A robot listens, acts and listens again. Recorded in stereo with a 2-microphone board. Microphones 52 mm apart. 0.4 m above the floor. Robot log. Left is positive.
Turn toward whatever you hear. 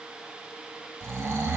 note: The snoring: about 65° right or 115° right.
cmd yaw -65
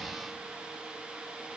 cmd idle
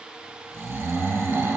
note: So it is at 50° right.
cmd yaw -50
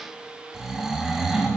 end: Found it: snoring, straight ahead.